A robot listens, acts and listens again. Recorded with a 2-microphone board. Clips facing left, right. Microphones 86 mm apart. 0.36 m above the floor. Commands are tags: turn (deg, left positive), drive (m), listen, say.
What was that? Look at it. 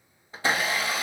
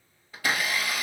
<turn deg="25"/>
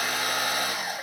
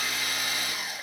<turn deg="130"/>
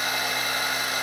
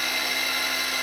<turn deg="35"/>
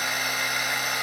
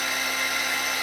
<turn deg="15"/>
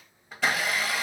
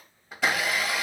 <say>Found it: a blender, straight ahead.</say>